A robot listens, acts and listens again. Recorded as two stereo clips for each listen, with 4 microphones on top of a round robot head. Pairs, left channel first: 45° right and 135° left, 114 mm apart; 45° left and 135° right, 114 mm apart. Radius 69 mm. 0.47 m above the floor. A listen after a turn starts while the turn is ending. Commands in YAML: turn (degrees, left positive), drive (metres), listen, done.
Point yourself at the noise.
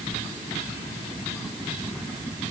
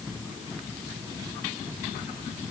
listen: true
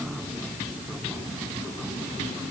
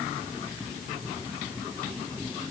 listen: true
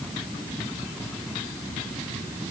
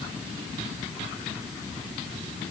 done: "I can't make out anything to turn to."